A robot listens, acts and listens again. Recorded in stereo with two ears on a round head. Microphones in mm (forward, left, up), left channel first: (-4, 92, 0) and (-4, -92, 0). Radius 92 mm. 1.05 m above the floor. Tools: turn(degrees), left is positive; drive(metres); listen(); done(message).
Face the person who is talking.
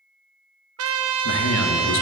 turn(degrees=70)
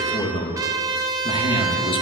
turn(degrees=30)
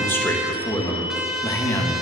turn(degrees=10)
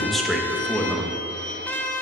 done("Facing the man speaking.")